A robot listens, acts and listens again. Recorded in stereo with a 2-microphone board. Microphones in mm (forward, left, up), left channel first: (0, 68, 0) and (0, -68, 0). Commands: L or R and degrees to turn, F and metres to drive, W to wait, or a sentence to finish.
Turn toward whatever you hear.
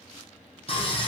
L45
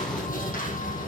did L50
L85
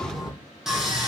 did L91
Found it: sawing, straight ahead.